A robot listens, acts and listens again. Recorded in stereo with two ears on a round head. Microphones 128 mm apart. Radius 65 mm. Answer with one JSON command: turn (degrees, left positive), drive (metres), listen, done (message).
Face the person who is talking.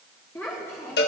{"turn": 15}
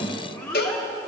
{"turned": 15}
{"turn": 150}
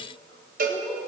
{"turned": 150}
{"listen": true}
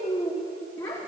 {"turn": 20}
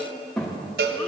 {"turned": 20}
{"done": "Found it: a child speaking, straight ahead, 1 to 2 m away."}